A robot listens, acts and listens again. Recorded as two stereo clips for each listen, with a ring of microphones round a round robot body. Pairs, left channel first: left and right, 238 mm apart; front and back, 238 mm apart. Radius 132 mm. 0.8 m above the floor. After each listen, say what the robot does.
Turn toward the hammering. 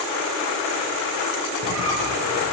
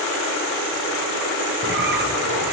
Keep listening.
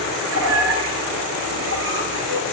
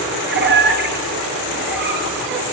Keep listening.
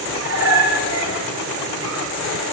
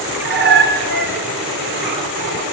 I can't make out hammering, only a squeak.